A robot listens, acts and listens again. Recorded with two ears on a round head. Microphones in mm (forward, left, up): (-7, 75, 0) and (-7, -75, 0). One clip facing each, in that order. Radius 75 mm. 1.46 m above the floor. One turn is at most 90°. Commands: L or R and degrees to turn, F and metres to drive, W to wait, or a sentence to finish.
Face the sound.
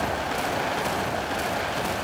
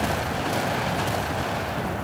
W
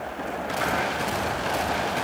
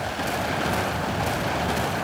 W
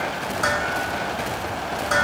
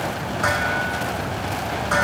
L45
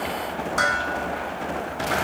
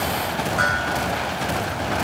L90
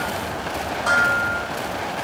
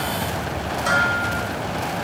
R20
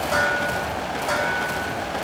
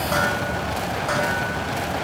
Found it: dishes clattering, straight ahead.